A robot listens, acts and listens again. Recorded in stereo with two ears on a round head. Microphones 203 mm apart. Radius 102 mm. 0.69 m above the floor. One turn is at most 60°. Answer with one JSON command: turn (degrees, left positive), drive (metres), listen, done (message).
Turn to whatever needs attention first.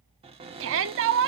{"turn": -60}
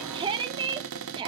{"turn": -25}
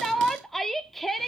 {"done": "Found it: a shout, straight ahead, 1 to 2 m away."}